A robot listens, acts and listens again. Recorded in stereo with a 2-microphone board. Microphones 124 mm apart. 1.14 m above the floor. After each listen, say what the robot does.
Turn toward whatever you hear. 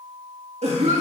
Turn 65° right.
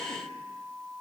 Keep listening.
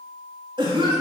Turn 45° right.
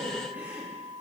Turn 15° right.
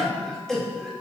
Facing the cough, 2 to 4 m away.